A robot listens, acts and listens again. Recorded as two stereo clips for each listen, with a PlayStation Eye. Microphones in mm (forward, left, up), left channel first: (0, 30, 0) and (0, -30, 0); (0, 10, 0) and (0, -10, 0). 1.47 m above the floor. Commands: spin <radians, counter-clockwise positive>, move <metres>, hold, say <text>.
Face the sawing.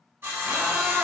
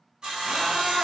spin -0.70
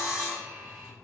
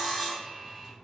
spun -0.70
say Facing the sawing, 1 to 2 m away.